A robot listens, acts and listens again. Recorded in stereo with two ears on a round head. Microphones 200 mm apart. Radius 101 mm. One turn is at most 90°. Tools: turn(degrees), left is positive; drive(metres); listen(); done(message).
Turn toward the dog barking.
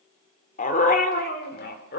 turn(degrees=50)
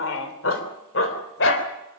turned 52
turn(degrees=60)
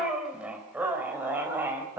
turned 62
turn(degrees=-10)
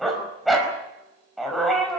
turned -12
done("Facing the dog barking.")